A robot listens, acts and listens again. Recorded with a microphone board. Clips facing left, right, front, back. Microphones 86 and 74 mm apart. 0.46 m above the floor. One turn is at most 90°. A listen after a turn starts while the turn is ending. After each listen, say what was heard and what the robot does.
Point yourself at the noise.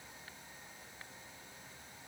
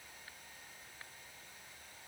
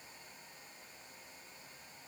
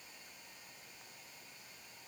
Keep listening.
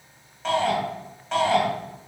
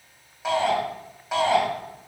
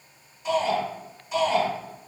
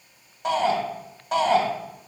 The shout: 170° right. Turn 90° right.
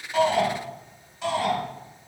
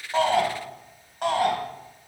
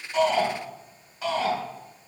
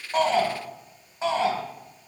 The shout is now 120° right. Turn 90° right.
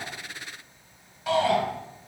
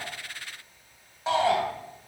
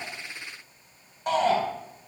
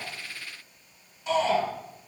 The shout is now 30° right. Turn 30° right.
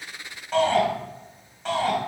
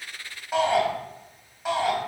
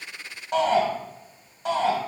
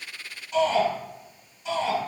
The shout is now 10° right. Turn 10° right.
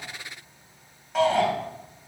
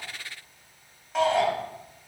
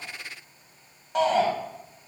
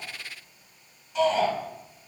Facing the shout.